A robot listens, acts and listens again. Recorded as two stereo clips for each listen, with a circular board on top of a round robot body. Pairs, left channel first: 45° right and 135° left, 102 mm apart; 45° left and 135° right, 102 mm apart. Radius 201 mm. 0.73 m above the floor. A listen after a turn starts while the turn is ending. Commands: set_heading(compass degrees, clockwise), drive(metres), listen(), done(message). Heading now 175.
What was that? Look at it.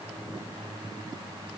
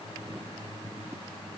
listen()
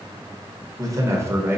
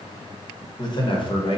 set_heading(105)
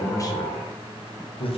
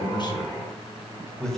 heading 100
set_heading(140)
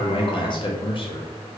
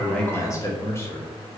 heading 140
set_heading(160)
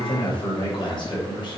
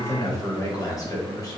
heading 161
set_heading(171)
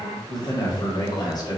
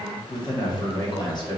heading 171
done("Facing the man speaking, 1 to 2 m away.")